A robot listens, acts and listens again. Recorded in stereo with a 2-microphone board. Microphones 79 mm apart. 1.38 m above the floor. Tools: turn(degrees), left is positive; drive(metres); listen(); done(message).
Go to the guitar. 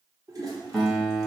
turn(degrees=30)
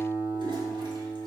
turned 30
turn(degrees=-25)
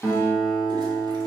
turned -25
turn(degrees=-10)
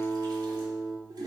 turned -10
drive(metres=1.0)
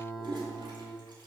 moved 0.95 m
drive(metres=1.0)
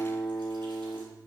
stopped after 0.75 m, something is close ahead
done("Arrived at the guitar, straight ahead.")